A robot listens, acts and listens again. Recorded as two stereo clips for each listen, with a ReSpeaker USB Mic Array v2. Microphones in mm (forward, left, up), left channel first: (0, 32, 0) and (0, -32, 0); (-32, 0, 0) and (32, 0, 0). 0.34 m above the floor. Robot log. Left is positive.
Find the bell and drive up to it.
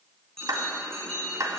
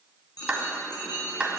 note: The bell: 170° left.
cmd yaw +170
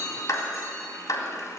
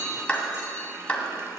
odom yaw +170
cmd fwd 1.0
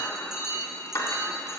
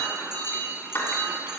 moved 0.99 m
cmd fwd 1.0
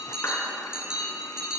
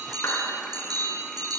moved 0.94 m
note: The bell is now 10° right.
cmd yaw -10
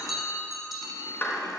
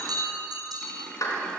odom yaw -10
cmd fwd 1.0
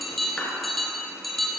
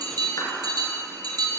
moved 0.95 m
cmd fwd 1.0
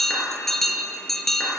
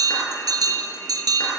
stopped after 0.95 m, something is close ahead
end: Arrived at the bell, straight ahead.